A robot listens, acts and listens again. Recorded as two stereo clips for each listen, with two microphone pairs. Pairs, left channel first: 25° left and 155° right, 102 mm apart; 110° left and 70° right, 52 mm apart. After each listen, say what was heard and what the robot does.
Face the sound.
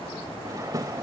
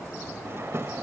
The drawer: 100° right. Turn 100° right.
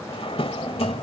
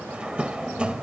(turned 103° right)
Facing the drawer.